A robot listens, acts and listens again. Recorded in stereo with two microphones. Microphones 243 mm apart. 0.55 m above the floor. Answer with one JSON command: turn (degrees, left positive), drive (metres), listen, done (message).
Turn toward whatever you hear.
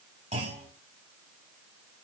{"turn": -25}
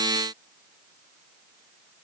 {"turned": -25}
{"listen": true}
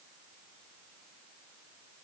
{"done": "I heard a clunk, but can't make it out now. It was about straight ahead or 130° right."}